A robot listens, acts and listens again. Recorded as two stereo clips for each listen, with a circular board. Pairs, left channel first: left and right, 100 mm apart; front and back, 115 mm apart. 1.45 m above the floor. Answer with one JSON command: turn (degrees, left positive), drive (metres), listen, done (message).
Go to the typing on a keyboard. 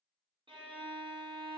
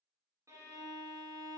{"listen": true}
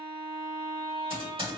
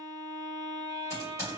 {"turn": -65}
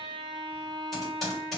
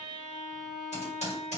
{"drive": 1.0}
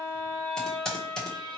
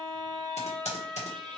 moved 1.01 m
{"turn": 10}
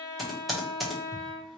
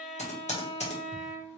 {"drive": 1.0}
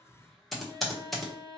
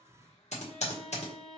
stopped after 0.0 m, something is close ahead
{"done": "Arrived at the typing on a keyboard, straight ahead."}